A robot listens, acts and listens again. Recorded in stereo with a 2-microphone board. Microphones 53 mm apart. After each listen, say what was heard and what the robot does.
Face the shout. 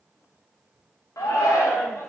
Turn 90° left.
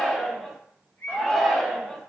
Found it: a shout, straight ahead, under 1 m away.